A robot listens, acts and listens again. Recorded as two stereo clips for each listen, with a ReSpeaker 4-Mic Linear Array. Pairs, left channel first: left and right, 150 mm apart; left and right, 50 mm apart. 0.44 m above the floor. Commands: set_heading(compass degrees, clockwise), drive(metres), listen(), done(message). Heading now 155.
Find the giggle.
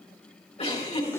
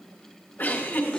set_heading(110)
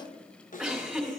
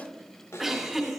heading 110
done("Facing the giggle, 2 to 4 m away.")